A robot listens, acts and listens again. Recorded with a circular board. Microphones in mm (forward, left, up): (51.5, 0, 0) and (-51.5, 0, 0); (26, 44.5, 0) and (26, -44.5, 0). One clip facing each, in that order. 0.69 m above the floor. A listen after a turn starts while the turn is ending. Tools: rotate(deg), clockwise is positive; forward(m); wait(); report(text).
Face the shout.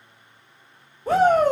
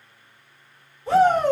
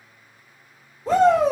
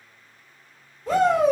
rotate(-40)
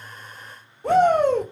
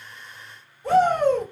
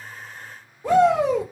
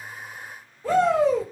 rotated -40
rotate(-20)
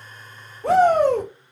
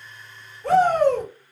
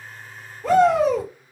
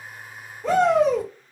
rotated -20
report("Facing the shout, 2 to 4 m away.")